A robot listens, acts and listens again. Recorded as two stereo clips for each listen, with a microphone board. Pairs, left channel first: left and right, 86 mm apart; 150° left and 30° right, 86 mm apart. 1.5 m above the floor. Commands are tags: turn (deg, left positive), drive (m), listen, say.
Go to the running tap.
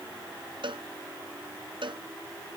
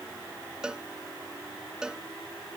<listen/>
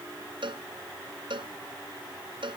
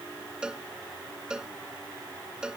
<listen/>
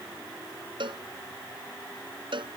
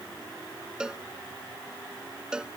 <say>I can't make out a running tap to turn to.</say>